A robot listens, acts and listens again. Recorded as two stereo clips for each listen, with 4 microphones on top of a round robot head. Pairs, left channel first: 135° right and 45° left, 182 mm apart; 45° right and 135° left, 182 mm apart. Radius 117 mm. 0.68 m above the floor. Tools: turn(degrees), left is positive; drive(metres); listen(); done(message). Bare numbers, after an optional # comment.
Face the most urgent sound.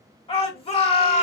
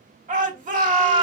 # The shout: 170° left.
turn(170)
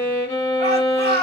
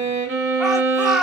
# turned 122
# The shout is now 50° left.
turn(50)
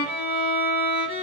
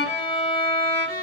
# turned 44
listen()
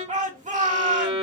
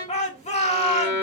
done("Facing the shout, 1 to 2 m away.")